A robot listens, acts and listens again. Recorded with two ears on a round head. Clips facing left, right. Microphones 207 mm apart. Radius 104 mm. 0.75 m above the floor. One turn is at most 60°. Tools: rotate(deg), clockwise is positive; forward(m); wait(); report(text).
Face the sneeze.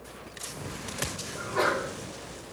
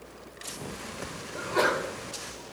rotate(55)
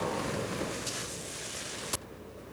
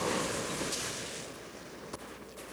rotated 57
wait()
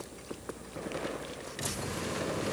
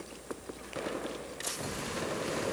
report("I heard a sneeze, but can't make it out now. It was about straight ahead or 65° right.")